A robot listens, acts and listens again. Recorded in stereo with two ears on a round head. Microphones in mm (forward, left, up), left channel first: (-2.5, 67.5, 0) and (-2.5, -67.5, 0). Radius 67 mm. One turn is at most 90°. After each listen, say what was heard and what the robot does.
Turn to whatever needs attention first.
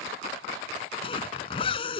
Keep listening.
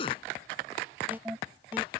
Turn 30° right.
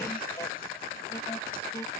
Keep listening.
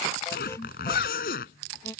So it is at 20° left. Turn 20° left.
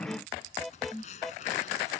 Found it: an alarm, straight ahead.